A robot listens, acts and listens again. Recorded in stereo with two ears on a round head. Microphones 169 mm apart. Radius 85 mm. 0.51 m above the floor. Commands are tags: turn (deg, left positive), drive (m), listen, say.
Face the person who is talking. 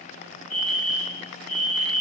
<listen/>
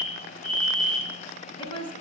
<turn deg="30"/>
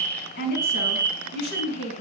<turn deg="120"/>
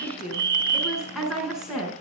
<say>Facing the woman speaking, over 4 m away.</say>